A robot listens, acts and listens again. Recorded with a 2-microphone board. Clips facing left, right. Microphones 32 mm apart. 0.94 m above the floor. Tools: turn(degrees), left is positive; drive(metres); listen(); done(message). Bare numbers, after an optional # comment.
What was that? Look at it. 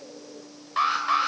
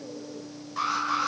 # The alarm: about 45° left or 135° left.
turn(45)
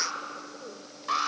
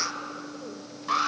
done("Found it: an alarm, straight ahead.")